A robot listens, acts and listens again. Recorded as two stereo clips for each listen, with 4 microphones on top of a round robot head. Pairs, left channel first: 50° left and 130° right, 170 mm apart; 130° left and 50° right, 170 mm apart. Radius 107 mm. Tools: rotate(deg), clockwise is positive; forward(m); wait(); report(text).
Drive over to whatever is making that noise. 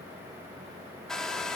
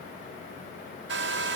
rotate(40)
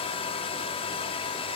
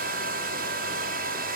rotate(10)
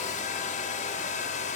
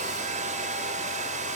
forward(1.0)
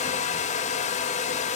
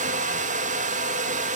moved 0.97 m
forward(1.0)
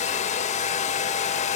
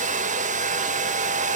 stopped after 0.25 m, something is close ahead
report("I am next to the hair dryer.")